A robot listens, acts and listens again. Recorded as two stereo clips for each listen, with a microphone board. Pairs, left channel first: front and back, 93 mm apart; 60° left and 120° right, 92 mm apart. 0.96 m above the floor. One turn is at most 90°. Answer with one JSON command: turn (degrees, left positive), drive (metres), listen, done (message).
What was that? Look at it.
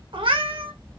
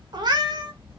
{"turn": -90}
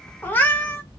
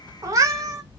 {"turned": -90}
{"turn": -65}
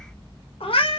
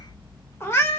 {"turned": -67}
{"done": "Facing the cat meowing."}